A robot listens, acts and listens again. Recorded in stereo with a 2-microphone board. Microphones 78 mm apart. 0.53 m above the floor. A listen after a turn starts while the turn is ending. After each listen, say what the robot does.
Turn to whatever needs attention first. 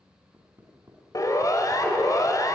Turn 45° left.
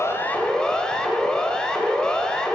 Turn 10° left.
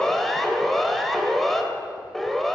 Found it: a siren, straight ahead, 2 to 4 m away.